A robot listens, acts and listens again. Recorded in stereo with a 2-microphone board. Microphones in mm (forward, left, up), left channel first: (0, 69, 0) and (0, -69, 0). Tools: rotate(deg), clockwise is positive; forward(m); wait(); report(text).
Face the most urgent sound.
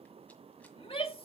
rotate(-45)
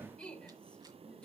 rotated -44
rotate(-10)
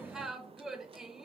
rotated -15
report("Found it: a shout, straight ahead.")